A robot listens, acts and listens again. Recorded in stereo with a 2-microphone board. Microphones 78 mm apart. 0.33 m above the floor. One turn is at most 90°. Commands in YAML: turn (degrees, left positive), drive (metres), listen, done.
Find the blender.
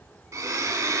turn: -45
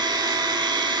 turn: -90
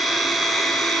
done: "Facing the blender."